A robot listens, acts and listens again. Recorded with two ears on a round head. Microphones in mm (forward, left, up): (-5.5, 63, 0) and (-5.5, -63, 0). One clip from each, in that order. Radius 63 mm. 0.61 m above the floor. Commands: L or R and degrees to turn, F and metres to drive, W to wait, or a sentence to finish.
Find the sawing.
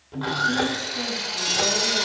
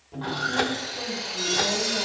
L30
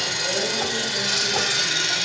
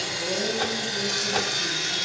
L115
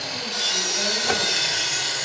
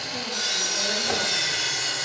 Found it: sawing, straight ahead, 2 to 4 m away.